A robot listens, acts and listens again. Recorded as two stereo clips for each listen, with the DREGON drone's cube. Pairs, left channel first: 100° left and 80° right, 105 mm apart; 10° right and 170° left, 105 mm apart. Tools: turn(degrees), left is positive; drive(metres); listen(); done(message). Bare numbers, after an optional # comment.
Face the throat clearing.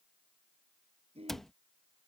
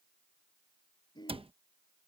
# The throat clearing: 60° right.
turn(-60)
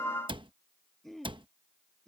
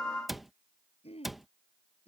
# The throat clearing is now 15° left.
turn(15)
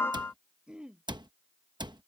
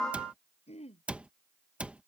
done("Found it: throat clearing, straight ahead.")